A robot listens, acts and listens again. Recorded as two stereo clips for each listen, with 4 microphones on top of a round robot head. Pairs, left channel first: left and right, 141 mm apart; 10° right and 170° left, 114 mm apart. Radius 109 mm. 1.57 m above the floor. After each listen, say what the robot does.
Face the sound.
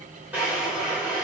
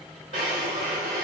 Turn 165° right.
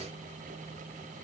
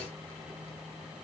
Keep listening.
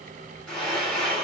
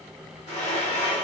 Facing the drawer.